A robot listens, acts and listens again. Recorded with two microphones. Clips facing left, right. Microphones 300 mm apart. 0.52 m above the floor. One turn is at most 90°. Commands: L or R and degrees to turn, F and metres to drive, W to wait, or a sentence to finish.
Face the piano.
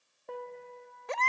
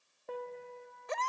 L30
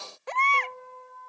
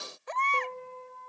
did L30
R30
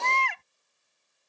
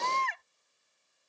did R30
W
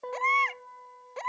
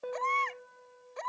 Facing the piano.